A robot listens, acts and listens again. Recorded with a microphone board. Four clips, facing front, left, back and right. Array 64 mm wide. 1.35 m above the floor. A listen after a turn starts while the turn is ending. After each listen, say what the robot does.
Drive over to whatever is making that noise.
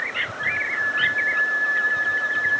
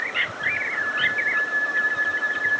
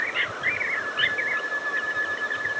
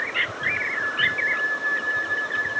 Turn 10° left.
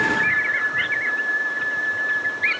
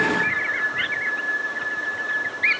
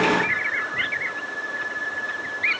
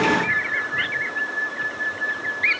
Drive 1.0 m forward.
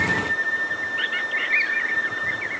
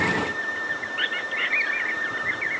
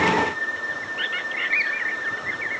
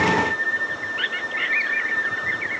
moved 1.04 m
Drive 1.0 m forward.
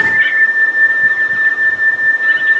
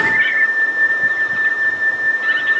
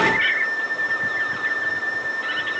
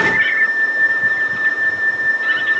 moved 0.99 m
Turn 10° left.
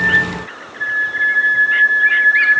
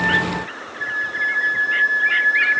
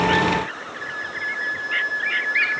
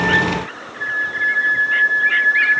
Drive 1.0 m forward.
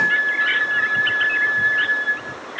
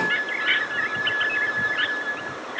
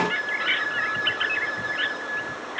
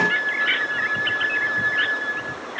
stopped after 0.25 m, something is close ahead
I am next to the flute.